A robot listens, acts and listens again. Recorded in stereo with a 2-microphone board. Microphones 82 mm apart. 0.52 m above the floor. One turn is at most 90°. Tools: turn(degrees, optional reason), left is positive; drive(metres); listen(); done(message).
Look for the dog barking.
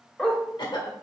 turn(degrees=30)
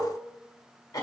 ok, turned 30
listen()
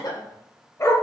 turn(degrees=90, reason="So it is at 140° left.")
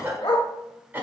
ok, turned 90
turn(degrees=55, reason="The dog barking is now 55° left.")
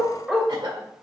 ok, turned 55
done("Found it: a dog barking, straight ahead.")